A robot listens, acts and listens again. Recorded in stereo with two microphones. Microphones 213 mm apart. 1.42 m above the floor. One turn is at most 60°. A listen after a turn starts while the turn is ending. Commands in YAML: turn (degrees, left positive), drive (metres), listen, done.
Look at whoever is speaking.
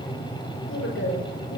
turn: 60
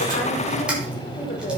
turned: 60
turn: 50
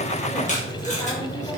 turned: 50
listen: true
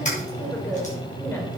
turn: 10
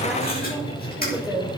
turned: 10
done: "Facing the woman speaking."